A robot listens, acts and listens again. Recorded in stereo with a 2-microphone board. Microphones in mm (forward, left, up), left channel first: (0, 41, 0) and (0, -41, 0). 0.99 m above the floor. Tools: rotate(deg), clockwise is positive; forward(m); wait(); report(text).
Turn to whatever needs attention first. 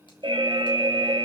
rotate(90)
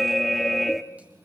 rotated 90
report("Found it: an alarm, straight ahead, 1 to 2 m away.")